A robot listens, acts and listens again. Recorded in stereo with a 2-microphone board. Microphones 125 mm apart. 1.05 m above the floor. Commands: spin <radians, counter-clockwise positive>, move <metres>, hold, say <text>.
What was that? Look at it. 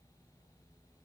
hold
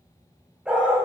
spin -0.52
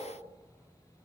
hold
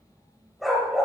spin -0.52
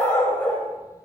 spin 0.17
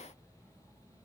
hold
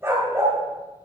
spin -0.35
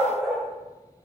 say Facing the dog barking, 2 to 4 m away.